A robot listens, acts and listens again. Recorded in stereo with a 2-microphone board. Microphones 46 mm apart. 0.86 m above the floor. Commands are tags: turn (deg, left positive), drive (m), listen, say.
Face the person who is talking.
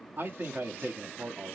<turn deg="-45"/>
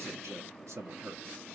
<turn deg="-90"/>
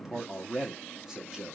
<turn deg="-15"/>
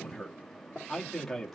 <say>Found it: a man speaking, straight ahead.</say>